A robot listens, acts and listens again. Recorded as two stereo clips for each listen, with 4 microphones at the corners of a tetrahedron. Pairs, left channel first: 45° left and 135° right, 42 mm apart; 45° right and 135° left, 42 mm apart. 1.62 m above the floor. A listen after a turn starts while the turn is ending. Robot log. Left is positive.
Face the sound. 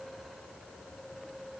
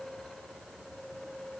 cmd idle
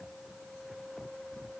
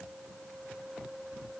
cmd idle
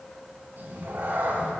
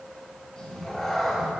note: The cat meowing: 135° right.
cmd yaw -135
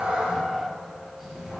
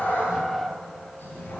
note: The cat meowing is now 50° right.
cmd yaw -50
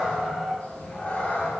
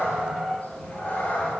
end: Facing the cat meowing.